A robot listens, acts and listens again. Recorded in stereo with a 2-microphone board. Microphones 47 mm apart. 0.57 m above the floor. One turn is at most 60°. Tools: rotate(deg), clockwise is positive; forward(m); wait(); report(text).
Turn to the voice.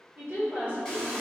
rotate(50)
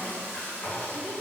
wait()
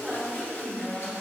rotate(15)
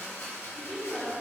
report("Facing the woman speaking.")